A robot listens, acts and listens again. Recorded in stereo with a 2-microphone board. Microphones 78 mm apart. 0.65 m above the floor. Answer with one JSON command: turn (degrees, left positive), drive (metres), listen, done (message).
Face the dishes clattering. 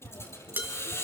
{"turn": -25}
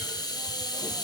{"listen": true}
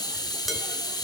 {"listen": true}
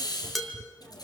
{"done": "Found it: dishes clattering, straight ahead, 2 to 4 m away."}